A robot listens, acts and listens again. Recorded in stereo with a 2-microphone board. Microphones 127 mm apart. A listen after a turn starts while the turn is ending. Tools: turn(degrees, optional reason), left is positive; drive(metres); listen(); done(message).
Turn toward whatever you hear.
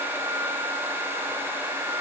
listen()
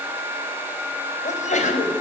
turn(degrees=75, reason="The sneeze: about 75° left or 105° left.")
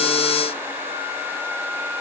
listen()
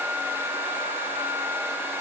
done("I heard a sneeze, but can't make it out now. It was about straight ahead or 30° left.")